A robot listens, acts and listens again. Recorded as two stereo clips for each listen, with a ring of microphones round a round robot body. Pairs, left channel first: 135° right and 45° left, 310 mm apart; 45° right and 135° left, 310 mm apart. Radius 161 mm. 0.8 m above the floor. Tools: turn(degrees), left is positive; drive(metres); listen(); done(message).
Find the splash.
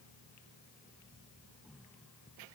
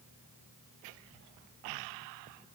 listen()
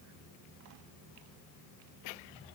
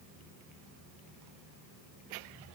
listen()
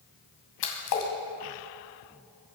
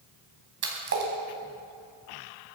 turn(degrees=-170)
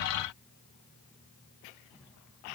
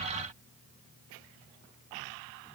done("Facing where the splash came from. I can't hear it now.")